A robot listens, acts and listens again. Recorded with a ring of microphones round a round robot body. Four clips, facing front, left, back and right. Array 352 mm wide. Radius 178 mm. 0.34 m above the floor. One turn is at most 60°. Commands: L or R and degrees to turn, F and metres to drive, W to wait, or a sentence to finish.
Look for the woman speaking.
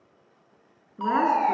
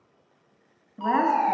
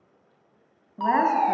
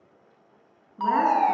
L60
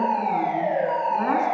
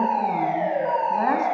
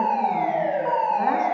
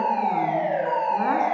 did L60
L60
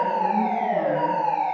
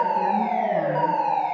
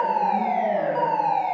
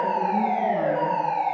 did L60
L35
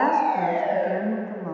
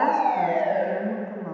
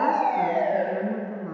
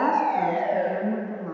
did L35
L20
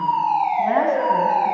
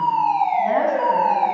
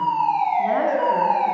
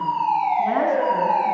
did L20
W
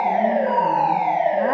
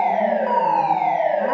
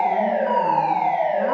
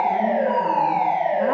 W
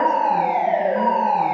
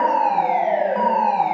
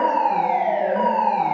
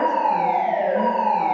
Facing where the woman speaking came from. I can't hear it now.